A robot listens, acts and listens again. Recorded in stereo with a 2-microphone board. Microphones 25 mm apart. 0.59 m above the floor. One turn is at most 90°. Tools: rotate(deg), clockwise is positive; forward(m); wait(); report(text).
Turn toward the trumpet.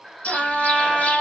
rotate(25)
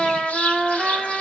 report("Found it: a trumpet, straight ahead.")